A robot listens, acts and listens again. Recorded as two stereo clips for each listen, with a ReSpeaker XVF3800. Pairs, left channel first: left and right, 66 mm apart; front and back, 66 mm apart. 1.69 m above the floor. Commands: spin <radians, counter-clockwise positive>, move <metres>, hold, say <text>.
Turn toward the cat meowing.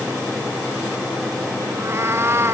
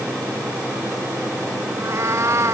spin -2.44
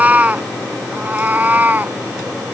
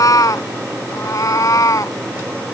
spin -0.44
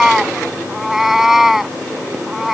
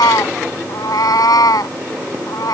say Found it: a cat meowing, straight ahead.